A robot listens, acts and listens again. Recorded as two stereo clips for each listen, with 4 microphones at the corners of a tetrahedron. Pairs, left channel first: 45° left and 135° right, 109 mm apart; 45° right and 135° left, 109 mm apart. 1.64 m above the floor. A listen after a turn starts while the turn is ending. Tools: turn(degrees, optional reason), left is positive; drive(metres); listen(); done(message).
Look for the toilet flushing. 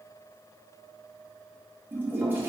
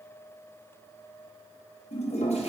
turn(degrees=-65, reason="The toilet flushing: 65° right.")
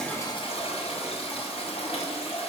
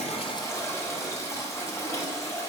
turn(degrees=20, reason="The toilet flushing is now 20° left.")
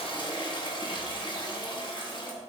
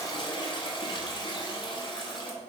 done("Facing the toilet flushing.")